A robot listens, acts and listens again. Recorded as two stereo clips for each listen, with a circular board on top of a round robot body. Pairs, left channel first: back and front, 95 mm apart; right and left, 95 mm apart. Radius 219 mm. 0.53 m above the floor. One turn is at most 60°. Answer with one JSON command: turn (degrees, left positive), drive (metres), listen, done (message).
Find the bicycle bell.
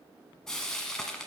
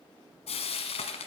{"listen": true}
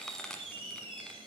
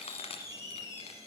{"listen": true}
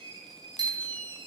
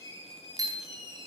{"turn": 40}
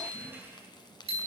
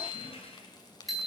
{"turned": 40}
{"done": "Found it: a bicycle bell, straight ahead."}